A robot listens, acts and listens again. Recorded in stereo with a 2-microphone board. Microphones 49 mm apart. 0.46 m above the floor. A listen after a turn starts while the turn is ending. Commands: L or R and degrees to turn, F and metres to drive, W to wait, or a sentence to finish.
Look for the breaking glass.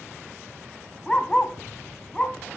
W
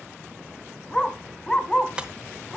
R20
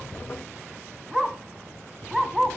W
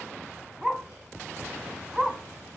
I heard breaking glass, but can't make it out now. It was about straight ahead or 140° right.